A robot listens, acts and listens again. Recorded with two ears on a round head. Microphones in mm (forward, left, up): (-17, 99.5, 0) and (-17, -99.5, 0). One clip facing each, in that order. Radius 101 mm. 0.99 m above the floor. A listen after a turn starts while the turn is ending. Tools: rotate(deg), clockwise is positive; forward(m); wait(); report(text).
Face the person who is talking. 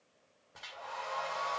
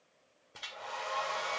wait()
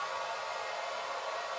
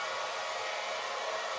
wait()
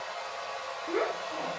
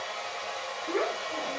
rotate(-30)
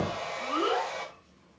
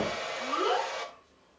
rotate(-145)
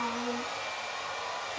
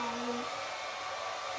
wait()
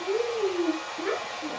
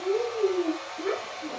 rotate(-25)
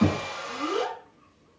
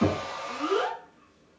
rotate(15)
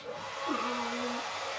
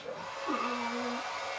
report("Found it: a child speaking, straight ahead.")